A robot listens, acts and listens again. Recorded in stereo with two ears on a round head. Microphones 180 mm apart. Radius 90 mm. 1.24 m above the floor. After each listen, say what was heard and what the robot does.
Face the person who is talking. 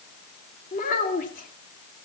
The child speaking: about 40° left or 140° left. Turn 40° left.
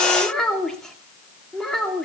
Found it: a child speaking, straight ahead, 2 to 4 m away.